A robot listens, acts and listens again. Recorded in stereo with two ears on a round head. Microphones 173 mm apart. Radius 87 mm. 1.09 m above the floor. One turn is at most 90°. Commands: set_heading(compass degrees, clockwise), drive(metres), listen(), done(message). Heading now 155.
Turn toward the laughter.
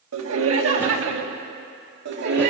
set_heading(215)
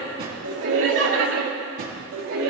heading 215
set_heading(285)
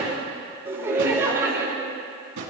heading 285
set_heading(300)
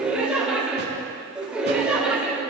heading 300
done("Found it: laughter, straight ahead.")